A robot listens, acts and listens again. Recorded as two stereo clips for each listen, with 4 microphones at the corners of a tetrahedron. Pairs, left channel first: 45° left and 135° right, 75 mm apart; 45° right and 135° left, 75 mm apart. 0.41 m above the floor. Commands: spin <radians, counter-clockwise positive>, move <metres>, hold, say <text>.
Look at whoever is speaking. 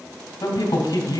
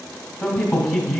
spin 0.26
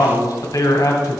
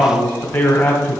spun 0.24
say Facing the man speaking, 1 to 2 m away.